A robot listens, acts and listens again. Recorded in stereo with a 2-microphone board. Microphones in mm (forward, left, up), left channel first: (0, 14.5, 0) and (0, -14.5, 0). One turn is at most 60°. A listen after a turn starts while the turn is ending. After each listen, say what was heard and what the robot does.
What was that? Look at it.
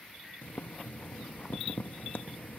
Turn 60° left.
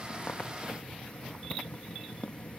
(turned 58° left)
So it is at 40° left. Turn 40° left.
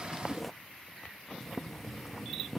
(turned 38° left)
Found it: boiling, straight ahead.